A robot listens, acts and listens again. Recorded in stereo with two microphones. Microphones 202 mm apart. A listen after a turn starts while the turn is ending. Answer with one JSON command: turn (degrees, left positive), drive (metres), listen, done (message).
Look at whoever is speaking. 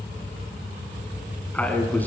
{"turn": 30}
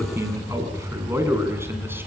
{"turn": -10}
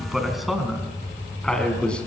{"done": "Facing the man speaking, over 4 m away."}